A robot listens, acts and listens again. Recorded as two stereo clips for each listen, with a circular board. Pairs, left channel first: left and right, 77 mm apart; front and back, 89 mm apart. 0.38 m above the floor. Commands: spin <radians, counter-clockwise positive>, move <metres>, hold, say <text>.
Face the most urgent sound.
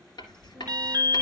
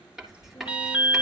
spin -1.92
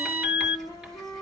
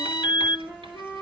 spin -0.35
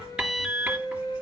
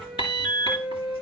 say Facing the alarm.